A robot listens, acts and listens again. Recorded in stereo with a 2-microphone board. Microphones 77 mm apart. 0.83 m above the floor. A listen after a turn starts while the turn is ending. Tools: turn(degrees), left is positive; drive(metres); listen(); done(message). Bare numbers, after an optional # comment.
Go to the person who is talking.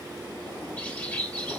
listen()
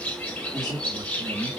# The man speaking: about 60° right or 120° right.
turn(-60)
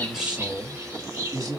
# So it is at 50° right.
turn(-50)
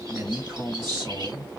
drive(1.0)
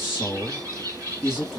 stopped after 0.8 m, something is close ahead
done("Arrived at the man speaking, straight ahead.")